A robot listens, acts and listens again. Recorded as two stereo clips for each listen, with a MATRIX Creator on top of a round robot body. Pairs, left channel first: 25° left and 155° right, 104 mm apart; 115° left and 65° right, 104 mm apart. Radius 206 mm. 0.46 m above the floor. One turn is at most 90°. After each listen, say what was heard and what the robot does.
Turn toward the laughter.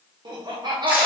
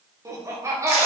The laughter: 125° right. Turn 90° right.
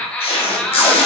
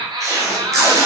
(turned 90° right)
The laughter is now 55° right. Turn 55° right.
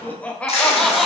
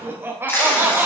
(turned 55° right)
The laughter is now 75° right. Turn 75° right.
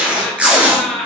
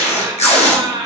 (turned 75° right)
The laughter is now 65° right. Turn 65° right.
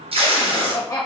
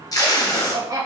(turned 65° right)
The laughter is now 20° right. Turn 20° right.
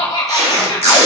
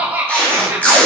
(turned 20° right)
Facing the laughter.